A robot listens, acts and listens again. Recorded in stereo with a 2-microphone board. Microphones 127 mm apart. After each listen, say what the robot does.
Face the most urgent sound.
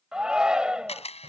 Turn 30° right.
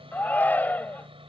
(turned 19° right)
Turn 15° left.
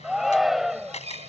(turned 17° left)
Facing the shout.